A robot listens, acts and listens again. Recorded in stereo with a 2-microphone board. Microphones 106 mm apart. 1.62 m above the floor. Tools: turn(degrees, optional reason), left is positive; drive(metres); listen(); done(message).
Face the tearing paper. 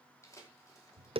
turn(degrees=30, reason="The tearing paper: about 30° left or 150° left.")
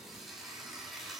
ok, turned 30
done("Facing the tearing paper.")